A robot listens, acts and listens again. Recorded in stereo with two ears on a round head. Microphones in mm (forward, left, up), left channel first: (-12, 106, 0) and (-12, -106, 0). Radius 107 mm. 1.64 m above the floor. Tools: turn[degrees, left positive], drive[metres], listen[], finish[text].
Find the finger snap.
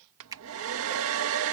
Thought: The finger snap: about 20° right or 160° right.
Action: turn[-20]
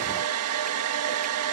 Action: listen[]
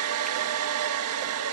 Action: listen[]
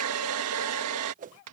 Action: finish[I heard a finger snap, but can't make it out now. It was about straight ahead or 140° right.]